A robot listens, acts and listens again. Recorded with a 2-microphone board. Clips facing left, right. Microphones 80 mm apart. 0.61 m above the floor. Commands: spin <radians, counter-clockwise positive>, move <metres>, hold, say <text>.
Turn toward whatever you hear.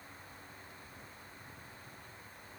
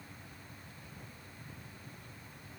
hold
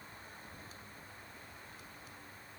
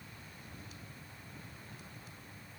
hold
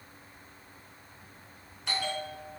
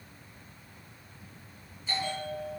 spin 1.57
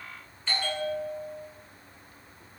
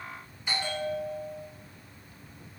spin -0.26
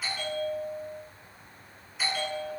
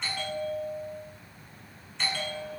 say Facing the bell.